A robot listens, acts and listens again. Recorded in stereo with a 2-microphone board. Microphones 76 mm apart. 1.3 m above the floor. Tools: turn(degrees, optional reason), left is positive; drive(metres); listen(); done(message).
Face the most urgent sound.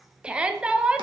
turn(degrees=-30)
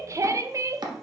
turn(degrees=-135, reason="So it is at 135° right.")
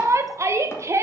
turn(degrees=-35, reason="The shout is now 35° right.")
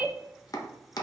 turn(degrees=-15, reason="The shout is now 15° right.")
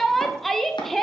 done("Facing the shout.")